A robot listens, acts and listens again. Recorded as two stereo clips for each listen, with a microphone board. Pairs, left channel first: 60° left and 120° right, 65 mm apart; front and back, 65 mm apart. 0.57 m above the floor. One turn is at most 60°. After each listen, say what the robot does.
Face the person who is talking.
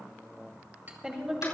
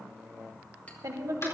Turn 60° left.
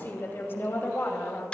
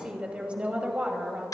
Turn 60° left.
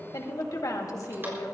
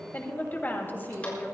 Turn 55° left.
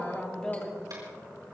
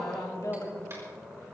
Turn 15° right.
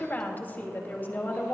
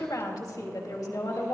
Found it: a woman speaking, straight ahead.